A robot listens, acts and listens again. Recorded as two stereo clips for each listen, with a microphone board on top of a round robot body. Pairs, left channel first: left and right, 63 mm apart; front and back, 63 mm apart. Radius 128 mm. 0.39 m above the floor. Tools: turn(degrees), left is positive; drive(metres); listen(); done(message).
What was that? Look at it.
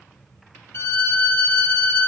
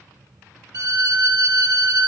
turn(degrees=145)
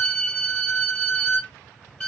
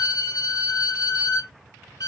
turn(degrees=15)
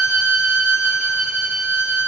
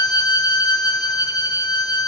done("Found it: a violin, straight ahead, 1 to 2 m away.")